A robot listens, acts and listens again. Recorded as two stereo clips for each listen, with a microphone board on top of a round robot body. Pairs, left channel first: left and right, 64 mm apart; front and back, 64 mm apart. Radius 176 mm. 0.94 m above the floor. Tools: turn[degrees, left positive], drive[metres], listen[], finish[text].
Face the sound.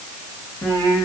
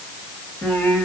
Thought: The singing: 60° left.
Action: turn[60]
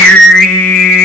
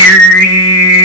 Action: finish[Found it: singing, straight ahead.]